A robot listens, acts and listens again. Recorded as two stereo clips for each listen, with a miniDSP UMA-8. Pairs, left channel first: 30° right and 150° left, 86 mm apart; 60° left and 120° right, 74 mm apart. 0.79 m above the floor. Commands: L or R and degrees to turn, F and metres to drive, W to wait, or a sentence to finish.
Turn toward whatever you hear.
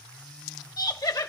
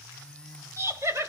R70
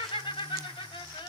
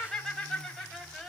R25
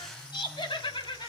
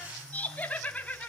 R15
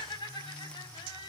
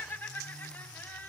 Found it: laughter, straight ahead.